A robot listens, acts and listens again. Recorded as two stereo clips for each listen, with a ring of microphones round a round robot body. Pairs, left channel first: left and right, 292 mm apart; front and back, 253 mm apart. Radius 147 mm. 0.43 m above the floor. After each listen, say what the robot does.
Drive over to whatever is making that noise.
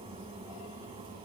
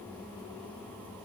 Keep listening.
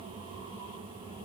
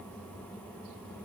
Keep listening.
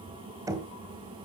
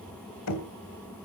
Turn 10° right.
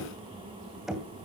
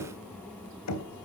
Drive 1.0 m forward.
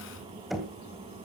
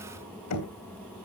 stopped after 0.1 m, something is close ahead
Blocked. The knocking is further on, straight ahead.